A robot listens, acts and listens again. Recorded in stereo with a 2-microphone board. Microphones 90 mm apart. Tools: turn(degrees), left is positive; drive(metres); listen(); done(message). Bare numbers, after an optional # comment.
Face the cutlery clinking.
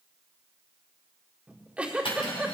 turn(90)
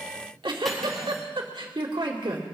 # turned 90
listen()
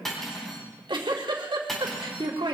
done("Found it: cutlery clinking, straight ahead.")